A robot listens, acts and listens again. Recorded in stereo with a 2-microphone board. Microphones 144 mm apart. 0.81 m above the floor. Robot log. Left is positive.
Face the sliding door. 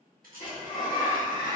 note: The sliding door: about 70° left or 110° left.
cmd yaw +70
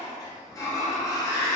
note: So it is at 25° left.
cmd yaw +25
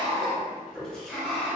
end: Found it: a sliding door, straight ahead, under 1 m away.